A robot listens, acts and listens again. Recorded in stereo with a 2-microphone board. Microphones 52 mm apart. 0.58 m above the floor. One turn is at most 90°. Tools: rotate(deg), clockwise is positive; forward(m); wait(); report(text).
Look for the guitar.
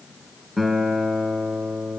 rotate(-30)
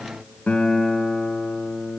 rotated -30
rotate(-90)
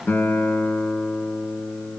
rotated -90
rotate(-50)
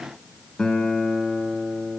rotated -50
rotate(-15)
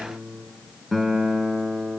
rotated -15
report("Found it: a guitar, straight ahead, 1 to 2 m away.")